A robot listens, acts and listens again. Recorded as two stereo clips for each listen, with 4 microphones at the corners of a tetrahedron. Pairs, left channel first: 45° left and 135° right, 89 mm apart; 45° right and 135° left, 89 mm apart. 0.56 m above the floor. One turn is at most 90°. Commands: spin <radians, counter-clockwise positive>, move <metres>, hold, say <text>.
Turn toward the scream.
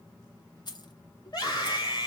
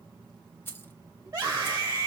spin 1.48
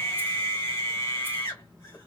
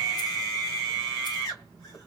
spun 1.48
say Facing the scream, 1 to 2 m away.